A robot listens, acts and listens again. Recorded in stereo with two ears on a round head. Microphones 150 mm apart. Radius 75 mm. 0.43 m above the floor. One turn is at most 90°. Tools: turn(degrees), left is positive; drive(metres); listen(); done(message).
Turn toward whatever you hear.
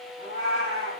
turn(degrees=90)
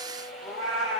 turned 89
done("Found it: a cat meowing, straight ahead.")